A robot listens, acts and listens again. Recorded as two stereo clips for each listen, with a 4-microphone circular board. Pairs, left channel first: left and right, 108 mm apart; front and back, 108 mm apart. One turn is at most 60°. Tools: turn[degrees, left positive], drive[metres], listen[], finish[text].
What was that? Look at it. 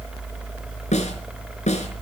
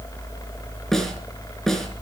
Thought: The snare drum: 85° left.
Action: turn[60]
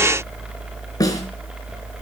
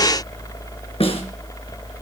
Thought: The snare drum is now 30° left.
Action: turn[30]
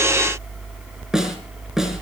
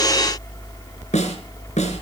Action: finish[Found it: a snare drum, straight ahead.]